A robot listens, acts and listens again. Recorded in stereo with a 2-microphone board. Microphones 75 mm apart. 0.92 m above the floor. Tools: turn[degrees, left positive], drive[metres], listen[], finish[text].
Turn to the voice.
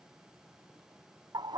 Action: listen[]
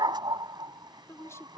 Thought: The woman speaking: about 40° left or 140° left.
Action: turn[40]
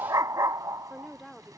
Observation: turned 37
Action: finish[Found it: a woman speaking, straight ahead.]